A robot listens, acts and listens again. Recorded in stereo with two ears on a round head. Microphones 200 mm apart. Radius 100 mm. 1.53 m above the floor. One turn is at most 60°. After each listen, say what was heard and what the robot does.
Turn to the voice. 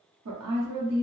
Turn 60° right.
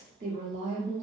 So it is at 35° right. Turn 35° right.
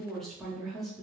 Facing the woman speaking, under 1 m away.